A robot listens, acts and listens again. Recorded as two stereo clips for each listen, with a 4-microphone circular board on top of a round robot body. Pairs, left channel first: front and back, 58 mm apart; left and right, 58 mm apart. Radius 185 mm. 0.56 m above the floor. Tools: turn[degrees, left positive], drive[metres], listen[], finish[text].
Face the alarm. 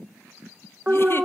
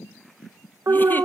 Thought: The alarm: 110° right.
Action: turn[-110]
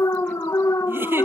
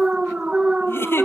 Thought: The alarm is now 20° right.
Action: turn[-20]
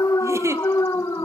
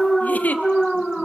Action: finish[Found it: an alarm, straight ahead.]